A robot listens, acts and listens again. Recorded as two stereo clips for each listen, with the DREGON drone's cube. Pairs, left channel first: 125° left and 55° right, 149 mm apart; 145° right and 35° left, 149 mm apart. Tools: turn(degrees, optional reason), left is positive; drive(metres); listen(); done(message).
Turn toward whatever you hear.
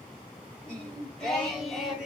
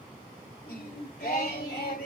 turn(degrees=-140, reason="The singing: 140° right.")
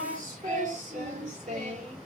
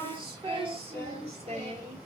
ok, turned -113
turn(degrees=-10, reason="The singing is now 10° right.")
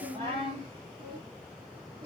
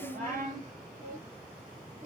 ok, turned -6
done("Found it: singing, straight ahead.")